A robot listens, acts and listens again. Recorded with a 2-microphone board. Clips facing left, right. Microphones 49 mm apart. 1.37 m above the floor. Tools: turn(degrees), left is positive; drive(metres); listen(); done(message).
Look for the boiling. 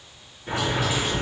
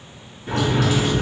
turn(degrees=15)
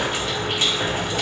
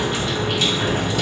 turn(degrees=150)
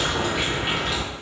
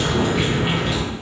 done("Found it: boiling, straight ahead.")